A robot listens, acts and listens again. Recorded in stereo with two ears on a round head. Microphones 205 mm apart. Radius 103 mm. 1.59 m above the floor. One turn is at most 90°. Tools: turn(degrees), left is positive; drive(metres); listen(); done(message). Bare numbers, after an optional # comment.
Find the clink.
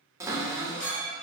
# The clink: about 40° left or 140° left.
turn(40)
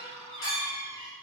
# So it is at 100° left.
turn(90)
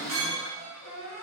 # The clink is now 20° left.
turn(20)
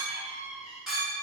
done("Found it: a clink, straight ahead, 1 to 2 m away.")